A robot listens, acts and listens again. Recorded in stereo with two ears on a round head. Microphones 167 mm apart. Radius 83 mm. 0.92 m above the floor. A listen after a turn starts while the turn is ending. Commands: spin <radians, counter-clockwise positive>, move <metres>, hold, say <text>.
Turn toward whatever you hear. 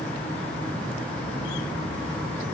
hold
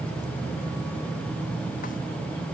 hold
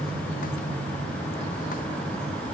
say I can't make out anything to turn to.